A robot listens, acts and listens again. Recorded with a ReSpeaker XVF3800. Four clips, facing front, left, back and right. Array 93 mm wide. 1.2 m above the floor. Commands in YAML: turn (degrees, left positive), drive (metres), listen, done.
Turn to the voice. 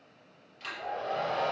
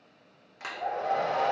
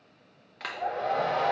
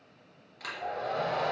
listen: true
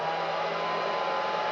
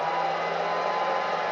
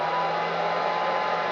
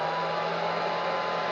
listen: true
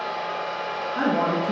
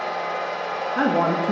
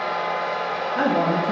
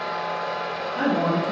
turn: 100
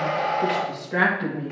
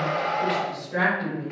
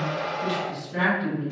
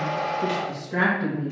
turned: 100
turn: -20
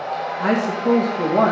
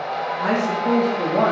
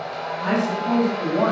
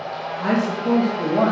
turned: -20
done: "Found it: a woman speaking, straight ahead."